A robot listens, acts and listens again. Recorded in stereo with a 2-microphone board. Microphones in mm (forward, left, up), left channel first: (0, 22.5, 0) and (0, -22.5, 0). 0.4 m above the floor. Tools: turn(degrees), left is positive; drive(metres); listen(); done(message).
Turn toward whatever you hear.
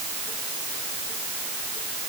listen()
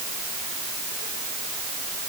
listen()
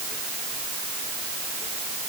done("I can't make out anything.")